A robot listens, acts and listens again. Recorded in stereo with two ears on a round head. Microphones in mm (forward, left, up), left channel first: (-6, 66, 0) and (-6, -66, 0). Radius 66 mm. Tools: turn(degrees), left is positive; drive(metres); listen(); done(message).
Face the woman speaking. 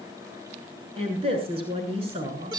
turn(degrees=-40)
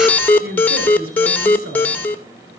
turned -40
turn(degrees=-95)
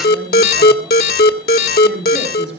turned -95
done("Facing the woman speaking, over 4 m away.")